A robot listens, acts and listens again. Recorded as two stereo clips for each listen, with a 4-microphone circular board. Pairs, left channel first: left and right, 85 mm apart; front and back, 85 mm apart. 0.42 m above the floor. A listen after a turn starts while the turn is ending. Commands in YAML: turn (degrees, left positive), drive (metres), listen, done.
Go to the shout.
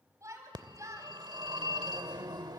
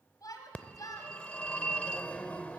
turn: -40
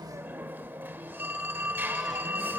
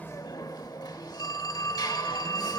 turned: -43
listen: true
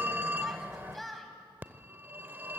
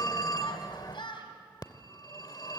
drive: 1.0
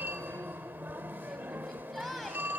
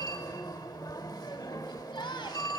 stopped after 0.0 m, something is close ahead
done: "Blocked. The shout is further on, straight ahead."